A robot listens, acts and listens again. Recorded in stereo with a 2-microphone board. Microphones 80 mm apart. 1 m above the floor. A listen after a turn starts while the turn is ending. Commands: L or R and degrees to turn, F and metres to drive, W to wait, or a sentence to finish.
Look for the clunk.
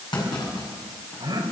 L60
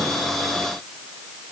W
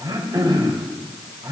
I heard a clunk, but can't make it out now. It was about straight ahead or 60° left.